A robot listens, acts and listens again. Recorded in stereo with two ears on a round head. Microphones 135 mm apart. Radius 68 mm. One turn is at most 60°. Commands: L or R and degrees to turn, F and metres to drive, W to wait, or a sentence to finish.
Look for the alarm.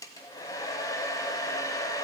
W
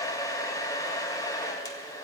W
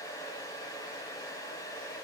I can't make out an alarm to turn to.